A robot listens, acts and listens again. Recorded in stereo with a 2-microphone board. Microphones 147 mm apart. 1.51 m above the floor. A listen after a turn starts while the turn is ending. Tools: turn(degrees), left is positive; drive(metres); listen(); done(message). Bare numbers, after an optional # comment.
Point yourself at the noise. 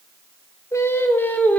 turn(30)
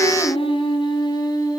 # So it is at 155° left.
turn(155)
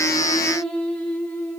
# The singing is now 15° left.
turn(15)
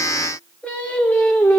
# The singing is now 15° left.
turn(15)
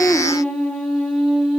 done("Facing the singing, over 4 m away.")